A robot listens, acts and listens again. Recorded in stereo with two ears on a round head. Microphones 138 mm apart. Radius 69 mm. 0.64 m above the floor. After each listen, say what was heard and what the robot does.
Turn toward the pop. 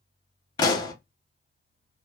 The pop: about 30° left or 150° left. Turn 30° left.
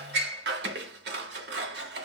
Keep listening.
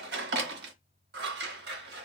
I heard a pop, but can't make it out now. It was about straight ahead or 120° left.